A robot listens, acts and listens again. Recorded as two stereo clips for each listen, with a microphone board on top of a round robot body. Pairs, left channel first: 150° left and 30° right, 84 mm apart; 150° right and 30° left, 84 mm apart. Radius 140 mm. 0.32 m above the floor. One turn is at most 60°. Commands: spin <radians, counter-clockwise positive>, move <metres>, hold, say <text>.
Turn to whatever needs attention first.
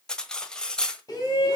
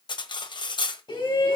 spin -1.05
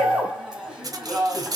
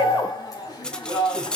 spin -1.05
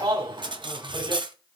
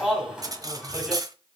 spin -0.87
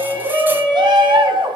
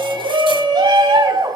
say Found it: a shout, straight ahead.